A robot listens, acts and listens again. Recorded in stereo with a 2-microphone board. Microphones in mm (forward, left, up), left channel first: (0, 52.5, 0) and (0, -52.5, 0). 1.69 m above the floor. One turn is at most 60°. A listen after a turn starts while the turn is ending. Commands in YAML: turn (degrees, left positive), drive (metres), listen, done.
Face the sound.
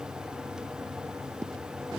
listen: true
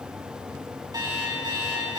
turn: -40
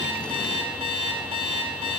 turn: -60
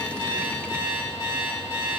turn: -35
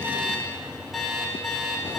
done: "Found it: an alarm clock, straight ahead, 2 to 4 m away."